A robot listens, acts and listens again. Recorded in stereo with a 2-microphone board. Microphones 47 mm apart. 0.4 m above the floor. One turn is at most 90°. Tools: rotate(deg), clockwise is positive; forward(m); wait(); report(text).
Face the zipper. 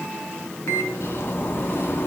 rotate(-45)
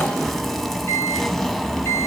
report("Found it: a zipper, straight ahead.")